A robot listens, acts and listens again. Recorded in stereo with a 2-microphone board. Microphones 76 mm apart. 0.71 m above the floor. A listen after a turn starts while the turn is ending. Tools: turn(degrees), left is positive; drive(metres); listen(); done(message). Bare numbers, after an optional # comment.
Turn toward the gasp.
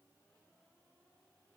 listen()
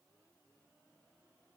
listen()
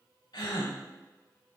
turn(90)
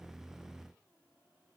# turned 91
done("I heard a gasp from this way, but can't make it out now.")